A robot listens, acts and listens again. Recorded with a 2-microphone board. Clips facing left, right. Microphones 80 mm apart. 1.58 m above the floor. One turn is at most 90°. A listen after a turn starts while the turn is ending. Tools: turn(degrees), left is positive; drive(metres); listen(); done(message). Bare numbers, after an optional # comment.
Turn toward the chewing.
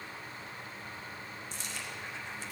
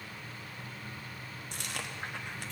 # The chewing: about 60° right or 120° right.
turn(-60)
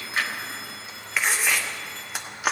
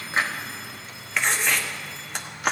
done("Found it: chewing, straight ahead.")